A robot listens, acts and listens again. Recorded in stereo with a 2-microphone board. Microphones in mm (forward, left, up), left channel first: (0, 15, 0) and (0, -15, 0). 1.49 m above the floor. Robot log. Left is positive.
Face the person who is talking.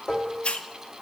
cmd idle
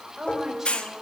cmd yaw -30
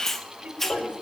note: So it is at 140° right.
cmd yaw -140
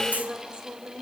note: The woman speaking is now 35° right.
cmd yaw -35
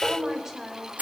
note: The woman speaking is now 15° right.
cmd yaw -15
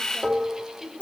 end: Facing the woman speaking, over 4 m away.